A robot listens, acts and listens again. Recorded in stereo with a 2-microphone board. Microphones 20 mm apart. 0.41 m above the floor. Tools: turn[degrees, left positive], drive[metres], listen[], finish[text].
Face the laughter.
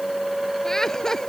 Thought: The laughter: about 25° left or 155° left.
Action: turn[25]
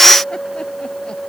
Action: listen[]
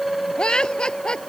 Thought: So it is at 130° left.
Action: turn[130]
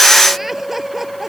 Thought: The laughter is now 15° right.
Action: turn[-15]
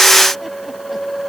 Action: listen[]
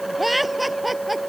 Thought: The laughter is now 10° right.
Action: turn[-10]
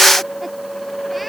Action: listen[]
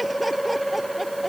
Action: listen[]
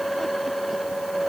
Action: finish[Facing where the laughter came from. I can't hear it now.]